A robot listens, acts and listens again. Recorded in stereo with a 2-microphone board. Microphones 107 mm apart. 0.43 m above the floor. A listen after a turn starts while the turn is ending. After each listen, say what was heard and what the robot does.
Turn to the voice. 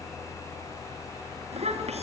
Turn 90° right.
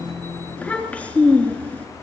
So it is at 15° left. Turn 15° left.
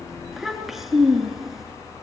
Facing the child speaking, 2 to 4 m away.